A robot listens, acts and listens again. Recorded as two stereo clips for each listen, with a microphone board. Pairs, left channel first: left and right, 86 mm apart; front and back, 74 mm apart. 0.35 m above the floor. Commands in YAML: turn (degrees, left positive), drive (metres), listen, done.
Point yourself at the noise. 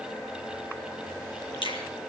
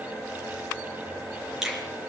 turn: 100
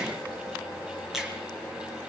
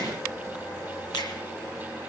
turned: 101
listen: true
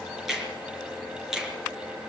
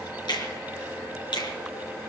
done: "Found it: a finger snap, straight ahead."